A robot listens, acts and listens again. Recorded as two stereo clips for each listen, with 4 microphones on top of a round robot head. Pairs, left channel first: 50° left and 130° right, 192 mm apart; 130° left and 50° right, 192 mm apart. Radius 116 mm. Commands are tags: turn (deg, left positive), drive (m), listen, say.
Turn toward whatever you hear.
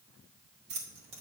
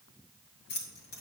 <turn deg="170"/>
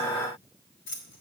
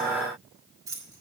<turn deg="25"/>
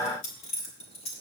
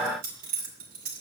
<turn deg="-10"/>
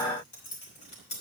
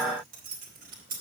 <say>Found it: keys jangling, straight ahead.</say>